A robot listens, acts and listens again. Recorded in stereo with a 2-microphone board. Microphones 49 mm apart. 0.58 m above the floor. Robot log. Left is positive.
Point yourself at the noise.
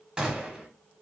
note: The gunshot: about 20° right or 160° right.
cmd yaw -20
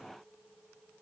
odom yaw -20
cmd idle
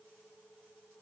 end: I heard a gunshot, but can't make it out now. It was about straight ahead or 140° right.